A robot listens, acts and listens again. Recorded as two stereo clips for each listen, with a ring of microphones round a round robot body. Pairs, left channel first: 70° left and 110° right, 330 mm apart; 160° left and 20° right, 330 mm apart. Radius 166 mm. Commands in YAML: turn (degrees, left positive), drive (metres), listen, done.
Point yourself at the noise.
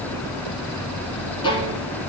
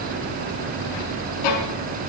turn: 145
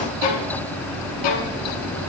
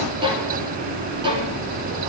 turn: 55
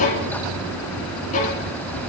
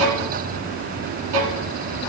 done: "Found it: a violin, straight ahead."